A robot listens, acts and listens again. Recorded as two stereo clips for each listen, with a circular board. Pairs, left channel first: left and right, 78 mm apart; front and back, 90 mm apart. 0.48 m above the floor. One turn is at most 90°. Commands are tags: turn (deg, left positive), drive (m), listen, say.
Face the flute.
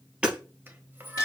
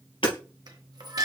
<turn deg="-90"/>
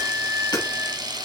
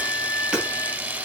<turn deg="-35"/>
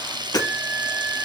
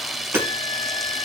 <listen/>
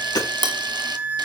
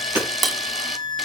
<turn deg="-20"/>
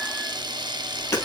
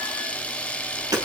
<listen/>
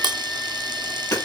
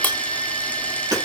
<listen/>
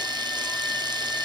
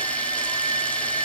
<say>Facing the flute.</say>